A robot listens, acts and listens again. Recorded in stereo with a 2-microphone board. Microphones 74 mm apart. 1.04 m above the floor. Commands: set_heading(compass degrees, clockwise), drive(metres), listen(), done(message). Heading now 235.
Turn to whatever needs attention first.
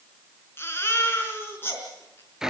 set_heading(205)
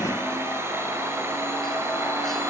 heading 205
listen()
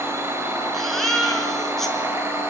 done("Found it: a baby crying, straight ahead.")